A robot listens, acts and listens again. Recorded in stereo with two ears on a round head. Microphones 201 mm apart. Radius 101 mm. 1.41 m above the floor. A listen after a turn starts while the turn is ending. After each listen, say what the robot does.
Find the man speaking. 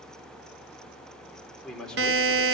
Turn 30° left.
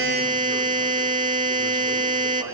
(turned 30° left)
Keep listening.
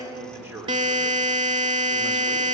Turn 30° right.
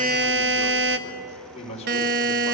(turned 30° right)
Turn 30° left.
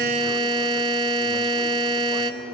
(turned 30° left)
Keep listening.
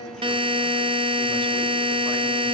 Keep listening.
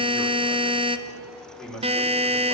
Facing the man speaking, 2 to 4 m away.